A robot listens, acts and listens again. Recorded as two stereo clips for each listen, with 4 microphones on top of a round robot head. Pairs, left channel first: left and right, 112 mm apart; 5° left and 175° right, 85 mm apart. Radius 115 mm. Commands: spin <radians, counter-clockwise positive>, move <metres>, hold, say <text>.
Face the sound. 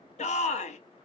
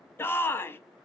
spin 1.31
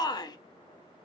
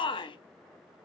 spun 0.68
spin 0.61
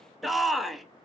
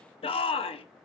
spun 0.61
say Facing the shout, under 1 m away.